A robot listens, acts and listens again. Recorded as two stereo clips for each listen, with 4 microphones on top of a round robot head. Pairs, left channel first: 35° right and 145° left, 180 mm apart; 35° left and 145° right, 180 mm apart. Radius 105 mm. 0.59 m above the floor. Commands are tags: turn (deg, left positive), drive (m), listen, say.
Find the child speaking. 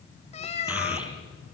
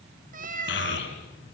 <turn deg="60"/>
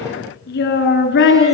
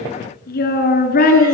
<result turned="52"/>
<say>Facing the child speaking.</say>